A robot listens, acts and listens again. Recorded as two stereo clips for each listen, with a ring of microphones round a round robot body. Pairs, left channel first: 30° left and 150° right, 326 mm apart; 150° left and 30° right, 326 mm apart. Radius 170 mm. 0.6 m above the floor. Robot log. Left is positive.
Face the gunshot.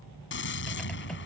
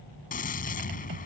note: The gunshot: 85° left.
cmd yaw +85
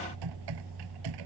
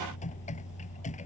end: I heard a gunshot from this way, but can't make it out now.